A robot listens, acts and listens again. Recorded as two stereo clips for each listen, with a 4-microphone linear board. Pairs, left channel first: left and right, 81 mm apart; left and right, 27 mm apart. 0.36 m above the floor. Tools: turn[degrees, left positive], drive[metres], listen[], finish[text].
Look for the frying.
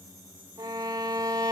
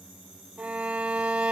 Action: listen[]
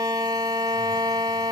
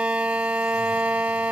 Action: listen[]
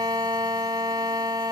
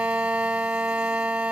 Action: finish[I can't make out frying to turn to.]